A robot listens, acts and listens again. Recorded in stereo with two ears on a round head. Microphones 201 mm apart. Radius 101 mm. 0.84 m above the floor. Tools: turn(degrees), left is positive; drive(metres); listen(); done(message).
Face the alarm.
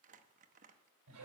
listen()
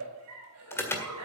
turn(degrees=30)
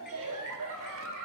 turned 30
listen()
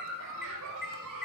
turn(degrees=135)
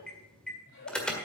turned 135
done("Facing the alarm, 1 to 2 m away.")